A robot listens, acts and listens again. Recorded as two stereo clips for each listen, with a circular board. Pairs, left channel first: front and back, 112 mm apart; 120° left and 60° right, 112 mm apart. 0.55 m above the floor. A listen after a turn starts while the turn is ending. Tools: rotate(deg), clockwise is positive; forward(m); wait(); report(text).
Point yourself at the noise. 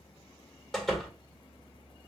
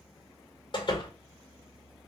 rotate(-85)
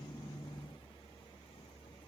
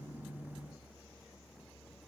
report("Facing where the door slam came from. I can't hear it now.")